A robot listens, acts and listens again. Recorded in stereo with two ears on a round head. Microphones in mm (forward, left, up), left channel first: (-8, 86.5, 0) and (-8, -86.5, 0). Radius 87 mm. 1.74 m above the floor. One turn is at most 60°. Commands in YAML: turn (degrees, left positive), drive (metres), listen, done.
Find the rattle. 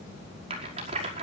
turn: -30
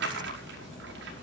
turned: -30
turn: -60
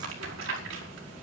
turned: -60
turn: -60
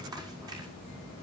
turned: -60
turn: -20
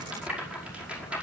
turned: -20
done: "Found it: a rattle, straight ahead."